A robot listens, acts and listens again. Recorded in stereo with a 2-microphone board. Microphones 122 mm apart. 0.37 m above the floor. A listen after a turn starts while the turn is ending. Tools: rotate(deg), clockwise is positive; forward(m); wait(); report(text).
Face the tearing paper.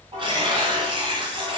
rotate(45)
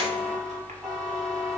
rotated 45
wait()
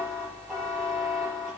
wait()
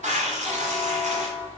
rotate(90)
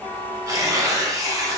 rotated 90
rotate(30)
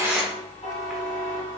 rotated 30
report("Facing the tearing paper, 1 to 2 m away.")